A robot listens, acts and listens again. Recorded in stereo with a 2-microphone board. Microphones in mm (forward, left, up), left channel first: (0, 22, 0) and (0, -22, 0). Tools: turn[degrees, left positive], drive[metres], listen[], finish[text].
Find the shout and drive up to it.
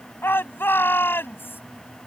Thought: The shout: about 55° left or 125° left.
Action: turn[55]
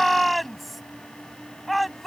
Action: drive[1.0]
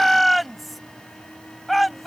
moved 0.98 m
Action: drive[1.0]
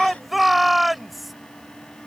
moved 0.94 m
Action: drive[1.0]
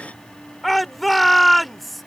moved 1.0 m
Action: drive[1.0]
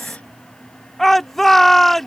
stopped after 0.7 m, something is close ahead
Thought: The shout is now 10° left.
Action: turn[10]
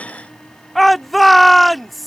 Action: finish[Arrived at the shout, straight ahead.]